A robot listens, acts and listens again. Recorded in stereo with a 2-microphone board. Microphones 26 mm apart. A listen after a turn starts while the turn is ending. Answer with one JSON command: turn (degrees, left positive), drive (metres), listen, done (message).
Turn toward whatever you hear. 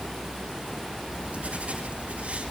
{"turn": -65}
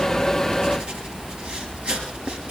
{"turn": -55}
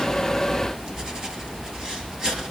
{"turn": -30}
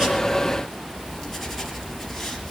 {"done": "Found it: writing, straight ahead."}